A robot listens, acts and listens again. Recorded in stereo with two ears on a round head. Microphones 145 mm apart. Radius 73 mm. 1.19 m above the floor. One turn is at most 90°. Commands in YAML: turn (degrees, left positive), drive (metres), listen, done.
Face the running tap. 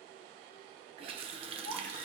turn: -35
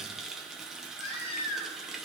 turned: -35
done: "Found it: a running tap, straight ahead."